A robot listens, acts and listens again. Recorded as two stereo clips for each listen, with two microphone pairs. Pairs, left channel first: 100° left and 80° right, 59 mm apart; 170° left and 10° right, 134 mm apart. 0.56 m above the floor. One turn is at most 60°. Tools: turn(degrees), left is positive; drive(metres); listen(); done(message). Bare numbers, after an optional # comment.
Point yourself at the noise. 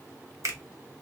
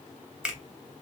# The finger snap: 95° right.
turn(-60)
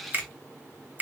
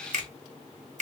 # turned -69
# The finger snap is now 25° right.
turn(-25)
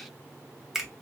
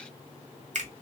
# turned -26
done("Facing the finger snap.")